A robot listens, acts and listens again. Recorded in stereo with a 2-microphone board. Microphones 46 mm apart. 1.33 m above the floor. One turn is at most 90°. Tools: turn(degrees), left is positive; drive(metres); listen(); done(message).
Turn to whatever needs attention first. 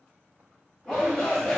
turn(degrees=30)
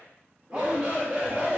turn(degrees=-20)
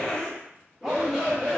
done("Facing the shout, 1 to 2 m away.")